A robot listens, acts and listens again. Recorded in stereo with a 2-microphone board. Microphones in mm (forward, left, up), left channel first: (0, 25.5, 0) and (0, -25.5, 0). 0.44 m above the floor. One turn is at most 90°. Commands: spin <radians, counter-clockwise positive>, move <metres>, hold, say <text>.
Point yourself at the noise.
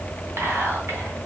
spin -1.05
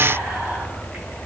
spin -0.87
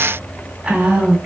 spin -0.44
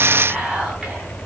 spin -0.26
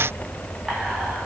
say Facing the whispering.